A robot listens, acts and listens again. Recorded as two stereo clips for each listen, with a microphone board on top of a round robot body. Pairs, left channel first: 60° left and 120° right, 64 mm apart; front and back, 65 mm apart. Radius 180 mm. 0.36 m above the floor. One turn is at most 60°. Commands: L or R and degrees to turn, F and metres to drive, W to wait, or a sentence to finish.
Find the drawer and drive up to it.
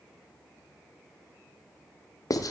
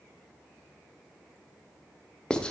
W
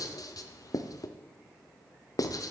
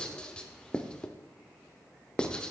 W
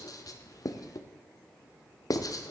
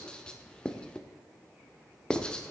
I can't make out a drawer, only writing.